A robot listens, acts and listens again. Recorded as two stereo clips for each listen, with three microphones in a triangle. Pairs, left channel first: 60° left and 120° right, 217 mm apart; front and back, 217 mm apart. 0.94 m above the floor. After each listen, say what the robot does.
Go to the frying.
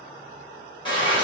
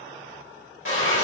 Turn 10° right.
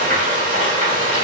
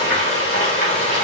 Drive 1.0 m forward.
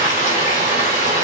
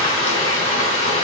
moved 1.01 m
Drive 1.0 m forward.
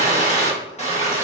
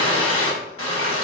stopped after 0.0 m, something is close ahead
Arrived at the frying, straight ahead.